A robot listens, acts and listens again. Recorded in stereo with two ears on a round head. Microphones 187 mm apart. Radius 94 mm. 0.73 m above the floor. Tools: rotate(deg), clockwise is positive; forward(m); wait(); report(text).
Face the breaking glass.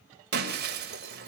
rotate(50)
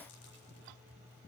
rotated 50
wait()
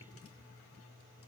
report("I heard breaking glass, but can't make it out now. It was about straight ahead or 80° right.")